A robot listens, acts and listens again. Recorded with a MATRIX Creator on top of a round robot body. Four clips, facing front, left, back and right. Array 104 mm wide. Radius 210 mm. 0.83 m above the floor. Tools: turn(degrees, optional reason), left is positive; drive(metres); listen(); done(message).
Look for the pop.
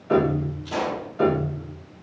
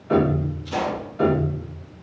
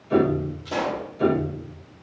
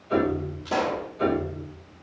turn(degrees=-105, reason="The pop: 105° right.")
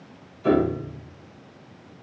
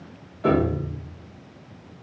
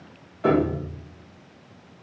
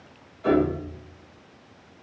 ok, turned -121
turn(degrees=15, reason="Nothing new. It was at 15° left.")
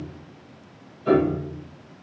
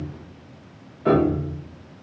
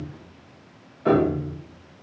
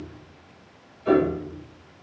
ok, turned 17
done("I heard a pop from this way, but can't make it out now.")